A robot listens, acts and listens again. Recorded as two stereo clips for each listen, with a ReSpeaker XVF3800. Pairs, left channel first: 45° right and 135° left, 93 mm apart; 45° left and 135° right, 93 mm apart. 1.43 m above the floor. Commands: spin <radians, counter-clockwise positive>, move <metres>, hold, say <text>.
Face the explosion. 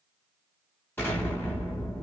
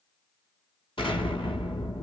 spin 0.35
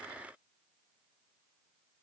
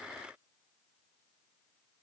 say Facing where the explosion came from. I can't hear it now.